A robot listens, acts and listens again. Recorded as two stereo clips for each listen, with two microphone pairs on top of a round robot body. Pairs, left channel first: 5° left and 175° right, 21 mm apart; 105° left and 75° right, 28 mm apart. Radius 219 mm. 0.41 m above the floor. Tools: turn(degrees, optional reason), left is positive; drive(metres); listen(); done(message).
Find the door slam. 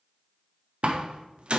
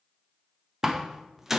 turn(degrees=-155, reason="The door slam: 155° right.")
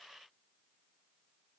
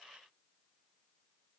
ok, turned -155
done("I heard a door slam from this way, but can't make it out now.")